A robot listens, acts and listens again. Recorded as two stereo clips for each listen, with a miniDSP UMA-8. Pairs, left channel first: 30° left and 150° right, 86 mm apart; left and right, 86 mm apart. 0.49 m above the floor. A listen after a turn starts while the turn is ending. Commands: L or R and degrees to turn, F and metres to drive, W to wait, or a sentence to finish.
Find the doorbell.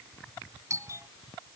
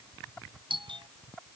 R95
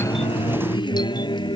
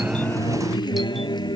W
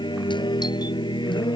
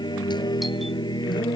W
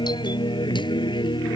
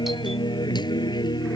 I heard a doorbell from this way, but can't make it out now.